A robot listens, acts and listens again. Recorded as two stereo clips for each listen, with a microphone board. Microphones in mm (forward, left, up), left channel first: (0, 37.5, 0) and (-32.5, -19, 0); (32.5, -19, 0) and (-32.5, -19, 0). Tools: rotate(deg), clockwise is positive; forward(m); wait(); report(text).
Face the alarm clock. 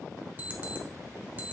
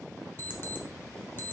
rotate(55)
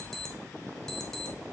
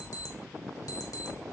rotate(20)
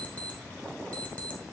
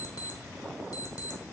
report("Facing the alarm clock, 1 to 2 m away.")